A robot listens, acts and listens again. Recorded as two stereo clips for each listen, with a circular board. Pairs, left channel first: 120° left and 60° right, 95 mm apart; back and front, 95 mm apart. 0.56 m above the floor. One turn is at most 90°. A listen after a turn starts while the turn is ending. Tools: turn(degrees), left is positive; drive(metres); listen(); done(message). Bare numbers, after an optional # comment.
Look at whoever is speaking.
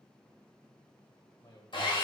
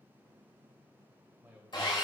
# The man speaking: 75° left.
turn(75)
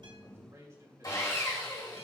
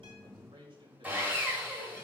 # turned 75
done("Facing the man speaking.")